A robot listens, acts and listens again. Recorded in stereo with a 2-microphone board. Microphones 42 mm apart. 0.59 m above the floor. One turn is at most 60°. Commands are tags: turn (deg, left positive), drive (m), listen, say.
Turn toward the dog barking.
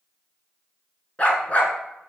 <turn deg="35"/>
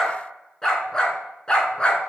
<turn deg="25"/>
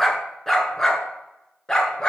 <turn deg="20"/>
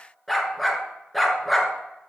<say>Facing the dog barking.</say>